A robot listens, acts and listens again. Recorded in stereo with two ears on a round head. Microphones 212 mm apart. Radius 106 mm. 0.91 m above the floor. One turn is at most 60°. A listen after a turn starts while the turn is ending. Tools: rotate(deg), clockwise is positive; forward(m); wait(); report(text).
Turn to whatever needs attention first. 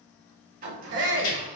rotate(50)
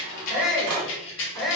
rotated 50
report("Facing the shout, 1 to 2 m away.")